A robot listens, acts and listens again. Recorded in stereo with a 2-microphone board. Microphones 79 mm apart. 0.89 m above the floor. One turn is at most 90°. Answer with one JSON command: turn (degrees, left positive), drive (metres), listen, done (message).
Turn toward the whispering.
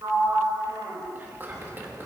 {"turn": -30}
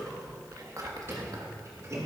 {"turn": -90}
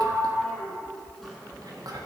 {"turn": -75}
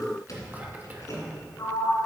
{"turn": -25}
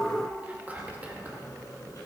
{"turn": -25}
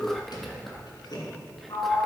{"done": "Found it: whispering, straight ahead, 1 to 2 m away."}